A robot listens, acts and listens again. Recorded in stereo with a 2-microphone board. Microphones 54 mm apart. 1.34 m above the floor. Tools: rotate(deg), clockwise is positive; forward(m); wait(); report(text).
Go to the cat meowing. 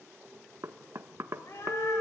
rotate(-65)
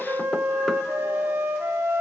wait()
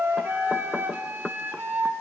wait()
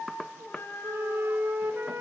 rotate(-50)
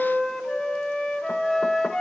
wait()
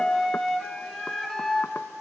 wait()
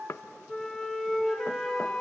report("I heard a cat meowing from this way, but can't make it out now. I did not reach it.")